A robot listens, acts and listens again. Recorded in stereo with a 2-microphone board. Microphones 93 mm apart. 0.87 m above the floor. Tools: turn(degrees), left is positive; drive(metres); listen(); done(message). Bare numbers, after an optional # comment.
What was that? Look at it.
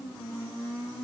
listen()
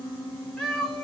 turn(30)
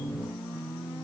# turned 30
listen()
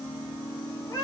# So it is at 140° left.
turn(140)
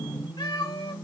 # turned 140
# The cat meowing is now 45° left.
turn(45)
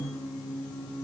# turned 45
listen()
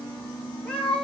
# The cat meowing is now 10° left.
turn(10)
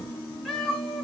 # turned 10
done("Facing the cat meowing.")